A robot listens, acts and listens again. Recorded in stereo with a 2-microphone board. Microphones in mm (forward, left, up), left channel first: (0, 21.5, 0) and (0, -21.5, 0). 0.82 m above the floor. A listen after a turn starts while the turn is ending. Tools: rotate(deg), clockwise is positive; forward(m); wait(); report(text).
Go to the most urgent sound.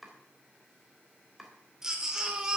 rotate(30)
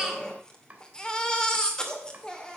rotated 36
rotate(-20)
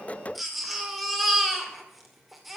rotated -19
forward(1.0)
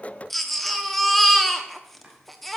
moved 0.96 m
forward(1.0)
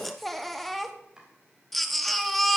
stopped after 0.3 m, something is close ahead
report("Arrived at the baby crying, straight ahead.")